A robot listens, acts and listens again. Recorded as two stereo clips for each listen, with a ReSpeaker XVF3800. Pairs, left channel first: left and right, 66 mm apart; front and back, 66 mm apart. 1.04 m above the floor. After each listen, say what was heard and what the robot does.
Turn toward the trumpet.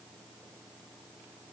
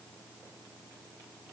Keep listening.
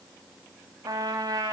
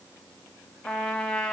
The trumpet: 75° right. Turn 75° right.
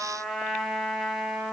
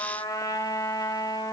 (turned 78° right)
Facing the trumpet.